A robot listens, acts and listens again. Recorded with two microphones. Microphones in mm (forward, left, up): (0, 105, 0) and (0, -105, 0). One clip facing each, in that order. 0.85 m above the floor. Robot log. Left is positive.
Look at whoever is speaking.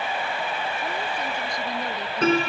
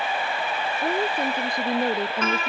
note: The woman speaking: about 60° right or 120° right.
cmd yaw -60
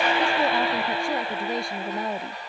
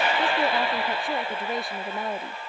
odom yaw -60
end: Facing the woman speaking.